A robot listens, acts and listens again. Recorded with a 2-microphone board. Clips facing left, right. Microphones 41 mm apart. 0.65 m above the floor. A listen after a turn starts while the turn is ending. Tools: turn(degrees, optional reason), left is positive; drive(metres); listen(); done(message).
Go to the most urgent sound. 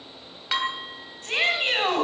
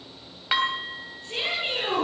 turn(degrees=70, reason="The shout: about 70° left or 110° left.")
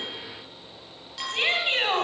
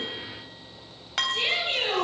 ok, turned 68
turn(degrees=40, reason="So it is at 40° left.")
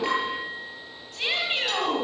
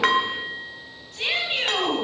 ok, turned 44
drive(metres=1.0)
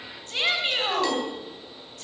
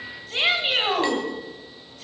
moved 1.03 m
turn(degrees=-15, reason="The shout is now 15° right.")
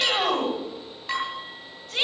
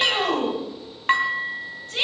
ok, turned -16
drive(metres=1.0)
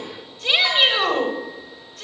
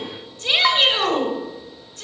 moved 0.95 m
drive(metres=1.0)
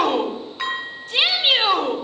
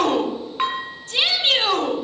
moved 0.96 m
turn(degrees=15, reason="The shout is now 15° left.")
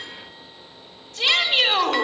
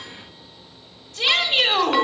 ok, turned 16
drive(metres=1.0)
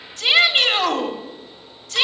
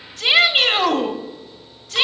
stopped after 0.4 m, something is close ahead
turn(degrees=-10, reason="The shout is now 10° right.")
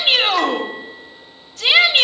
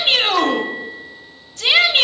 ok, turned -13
done("Arrived at the shout, straight ahead.")